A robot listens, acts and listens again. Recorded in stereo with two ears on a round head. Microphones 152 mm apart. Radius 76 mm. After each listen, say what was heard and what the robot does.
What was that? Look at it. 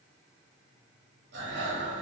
The breathing: about 65° right or 115° right. Turn 65° right.
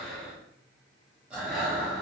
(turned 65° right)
Facing the breathing.